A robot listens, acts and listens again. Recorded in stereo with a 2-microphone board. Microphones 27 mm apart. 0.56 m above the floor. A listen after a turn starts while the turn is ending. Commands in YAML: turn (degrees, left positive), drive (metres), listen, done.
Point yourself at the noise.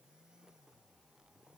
listen: true
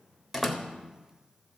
turn: -30
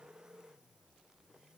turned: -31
listen: true
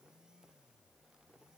done: "I heard a door slam, but can't make it out now. It was about 25° left or 145° right."